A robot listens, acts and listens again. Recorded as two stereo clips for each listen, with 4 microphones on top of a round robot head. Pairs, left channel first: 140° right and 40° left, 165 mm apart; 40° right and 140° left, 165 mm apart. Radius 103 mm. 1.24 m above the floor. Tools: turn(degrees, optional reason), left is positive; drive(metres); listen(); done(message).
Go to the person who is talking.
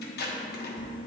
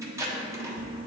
listen()
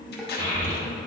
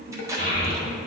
turn(degrees=105, reason="The child speaking: 105° left.")
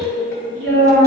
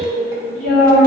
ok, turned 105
drive(metres=1.0)
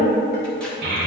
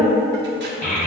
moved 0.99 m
drive(metres=1.0)
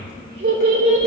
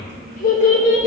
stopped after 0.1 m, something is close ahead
done("I am next to the child speaking.")